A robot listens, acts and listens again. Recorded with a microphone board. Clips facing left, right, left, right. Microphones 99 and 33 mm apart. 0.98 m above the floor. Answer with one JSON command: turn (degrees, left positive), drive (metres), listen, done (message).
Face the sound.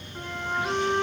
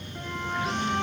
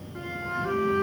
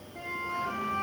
{"turn": 30}
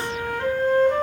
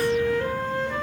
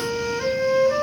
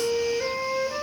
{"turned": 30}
{"turn": 120}
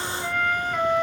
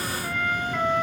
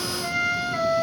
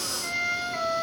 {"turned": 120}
{"turn": 35}
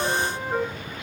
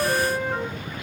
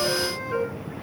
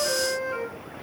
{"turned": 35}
{"done": "Facing the flute."}